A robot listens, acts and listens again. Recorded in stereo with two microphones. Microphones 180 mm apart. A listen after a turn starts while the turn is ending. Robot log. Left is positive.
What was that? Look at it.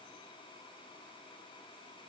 cmd idle
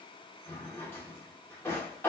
cmd yaw +30
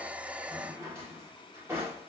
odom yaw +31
note: So it is at 15° right.
cmd yaw -15
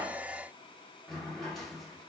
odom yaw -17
end: Found it: a drawer, straight ahead, 1 to 2 m away.